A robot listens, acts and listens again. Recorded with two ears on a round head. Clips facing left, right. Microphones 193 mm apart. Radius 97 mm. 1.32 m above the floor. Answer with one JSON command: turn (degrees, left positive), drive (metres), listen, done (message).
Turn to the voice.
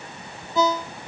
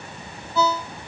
{"listen": true}
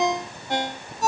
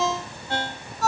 {"listen": true}
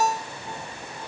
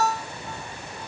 {"done": "I can't make out anyone speaking, only a ringtone."}